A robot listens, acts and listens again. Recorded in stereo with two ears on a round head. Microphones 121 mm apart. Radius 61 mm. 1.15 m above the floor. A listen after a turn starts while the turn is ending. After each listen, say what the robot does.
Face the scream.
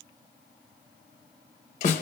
Keep listening.
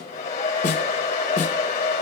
Keep listening.
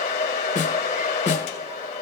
I can't make out a scream, only a hair dryer and a snare drum.